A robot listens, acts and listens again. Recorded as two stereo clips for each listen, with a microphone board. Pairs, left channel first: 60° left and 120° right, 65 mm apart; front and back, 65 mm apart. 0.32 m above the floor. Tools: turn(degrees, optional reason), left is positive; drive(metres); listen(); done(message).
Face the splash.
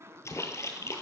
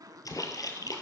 turn(degrees=20, reason="The splash: 20° left.")
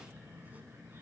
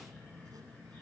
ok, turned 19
done("I heard a splash from this way, but can't make it out now.")